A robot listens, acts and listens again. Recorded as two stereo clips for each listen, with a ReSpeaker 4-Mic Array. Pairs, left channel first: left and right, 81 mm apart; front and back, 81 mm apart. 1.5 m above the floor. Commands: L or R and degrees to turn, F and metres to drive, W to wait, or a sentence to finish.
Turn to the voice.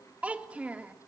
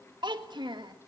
R165
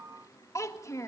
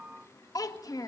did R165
L40
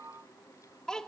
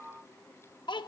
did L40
L10
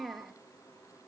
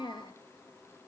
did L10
Found it: a child speaking, straight ahead.